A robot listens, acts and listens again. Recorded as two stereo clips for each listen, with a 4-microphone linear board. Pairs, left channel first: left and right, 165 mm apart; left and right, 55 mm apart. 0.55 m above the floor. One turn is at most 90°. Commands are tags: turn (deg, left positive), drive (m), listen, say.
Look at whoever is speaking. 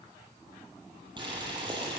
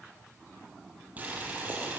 <listen/>
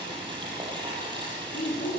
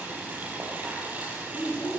<turn deg="75"/>
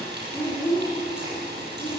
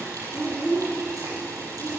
<say>Facing the child speaking.</say>